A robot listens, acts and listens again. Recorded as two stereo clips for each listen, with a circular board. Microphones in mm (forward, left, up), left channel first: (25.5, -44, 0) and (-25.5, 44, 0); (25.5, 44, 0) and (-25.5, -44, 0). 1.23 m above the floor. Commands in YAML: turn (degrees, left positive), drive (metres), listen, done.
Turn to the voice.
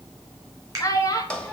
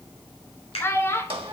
done: "Found it: a child speaking, straight ahead, 1 to 2 m away."